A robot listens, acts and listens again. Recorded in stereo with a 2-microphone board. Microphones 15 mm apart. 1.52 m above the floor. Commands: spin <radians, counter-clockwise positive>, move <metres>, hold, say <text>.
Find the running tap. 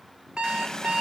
spin 0.70
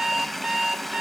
say Facing the running tap.